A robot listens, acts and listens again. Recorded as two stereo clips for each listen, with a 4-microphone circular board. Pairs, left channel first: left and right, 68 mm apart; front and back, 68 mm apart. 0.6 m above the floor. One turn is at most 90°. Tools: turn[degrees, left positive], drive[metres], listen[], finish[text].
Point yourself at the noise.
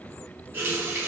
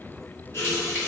Thought: The running tap: 45° right.
Action: turn[-45]
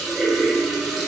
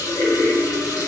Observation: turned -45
Action: finish[Found it: a running tap, straight ahead.]